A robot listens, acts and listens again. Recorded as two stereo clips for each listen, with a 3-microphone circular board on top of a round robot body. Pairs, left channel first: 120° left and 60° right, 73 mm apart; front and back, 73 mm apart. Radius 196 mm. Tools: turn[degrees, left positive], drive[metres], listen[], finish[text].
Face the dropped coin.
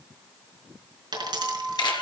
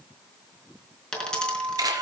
Thought: The dropped coin: 80° right.
Action: turn[-80]
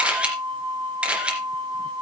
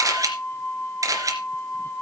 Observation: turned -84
Action: finish[Facing where the dropped coin came from. I can't hear it now.]